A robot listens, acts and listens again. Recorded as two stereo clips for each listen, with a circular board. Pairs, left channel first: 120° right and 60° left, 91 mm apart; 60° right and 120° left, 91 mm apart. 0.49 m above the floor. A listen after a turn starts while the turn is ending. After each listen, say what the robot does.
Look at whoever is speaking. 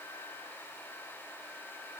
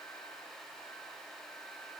Keep listening.
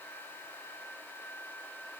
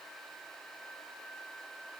Keep listening.
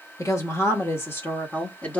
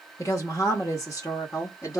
Turn 60° right.
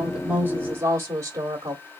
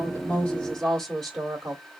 Turn 25° left.
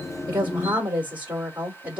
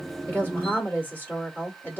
Facing the woman speaking.